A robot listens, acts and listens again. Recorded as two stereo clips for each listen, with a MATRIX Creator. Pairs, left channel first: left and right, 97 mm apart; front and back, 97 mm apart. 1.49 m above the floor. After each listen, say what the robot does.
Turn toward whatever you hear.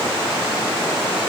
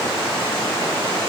Keep listening.
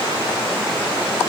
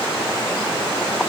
Keep listening.
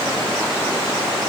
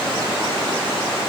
I can't make out anything to turn to.